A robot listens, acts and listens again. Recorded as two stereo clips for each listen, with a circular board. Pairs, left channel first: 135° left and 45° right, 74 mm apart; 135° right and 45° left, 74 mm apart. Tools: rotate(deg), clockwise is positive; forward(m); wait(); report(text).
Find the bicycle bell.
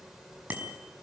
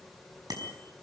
rotate(-25)
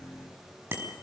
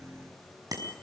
rotate(-15)
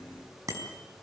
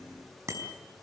report("Facing the bicycle bell.")